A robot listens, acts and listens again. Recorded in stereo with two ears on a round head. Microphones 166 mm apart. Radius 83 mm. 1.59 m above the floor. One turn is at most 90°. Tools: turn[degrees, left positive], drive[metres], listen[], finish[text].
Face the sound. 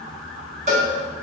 Thought: The cowbell: about 40° right or 140° right.
Action: turn[-40]
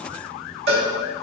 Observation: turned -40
Thought: So it is at 90° right.
Action: turn[-90]
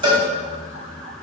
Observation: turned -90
Thought: The cowbell is now 30° right.
Action: turn[-30]
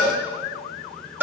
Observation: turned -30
Thought: The cowbell is now 15° right.
Action: turn[-15]
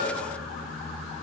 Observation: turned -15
Action: listen[]
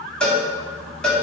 Action: finish[Facing the cowbell.]